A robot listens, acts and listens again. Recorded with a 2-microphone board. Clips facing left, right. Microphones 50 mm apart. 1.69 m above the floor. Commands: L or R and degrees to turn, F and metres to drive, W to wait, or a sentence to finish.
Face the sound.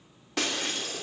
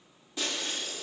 L65
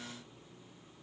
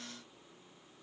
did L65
W
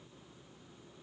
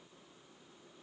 I heard breaking glass, but can't make it out now. It was about straight ahead or 50° left.